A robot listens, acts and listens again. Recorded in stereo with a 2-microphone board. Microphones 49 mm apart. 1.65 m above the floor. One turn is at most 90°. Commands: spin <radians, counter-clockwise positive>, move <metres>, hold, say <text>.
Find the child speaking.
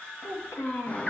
spin 1.22
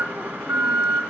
hold
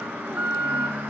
hold
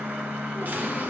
say I heard a child speaking, but can't make it out now. It was about straight ahead or 40° left.